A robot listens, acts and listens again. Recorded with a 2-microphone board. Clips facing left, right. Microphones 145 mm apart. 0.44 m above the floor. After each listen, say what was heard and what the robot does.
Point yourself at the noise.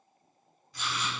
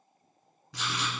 Turn 90° right.
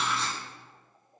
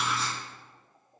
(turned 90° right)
Facing the writing, 1 to 2 m away.